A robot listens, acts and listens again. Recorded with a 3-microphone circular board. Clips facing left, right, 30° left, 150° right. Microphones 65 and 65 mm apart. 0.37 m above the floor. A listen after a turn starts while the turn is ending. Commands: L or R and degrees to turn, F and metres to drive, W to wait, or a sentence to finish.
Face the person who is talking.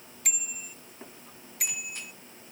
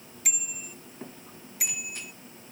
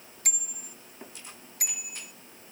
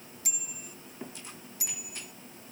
W
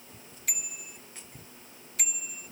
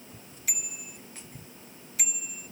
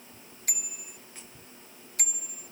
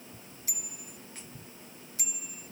W
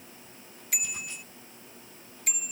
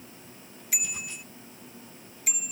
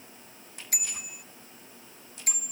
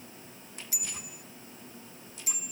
I can't make out anyone speaking to turn to.